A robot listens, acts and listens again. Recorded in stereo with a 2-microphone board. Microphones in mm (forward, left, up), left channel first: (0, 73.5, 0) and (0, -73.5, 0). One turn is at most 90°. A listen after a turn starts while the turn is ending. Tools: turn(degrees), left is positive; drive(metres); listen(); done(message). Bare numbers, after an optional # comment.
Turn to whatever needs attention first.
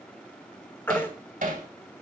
turn(30)
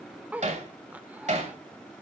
listen()
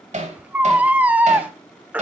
# So it is at 15° right.
turn(-15)
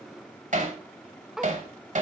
listen()
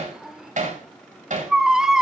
done("Found it: a baby crying, straight ahead.")